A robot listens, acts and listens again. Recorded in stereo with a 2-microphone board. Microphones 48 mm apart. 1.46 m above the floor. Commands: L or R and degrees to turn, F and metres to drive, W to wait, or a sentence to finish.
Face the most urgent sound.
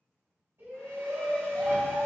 R65
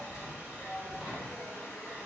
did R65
Facing the shout, 1 to 2 m away.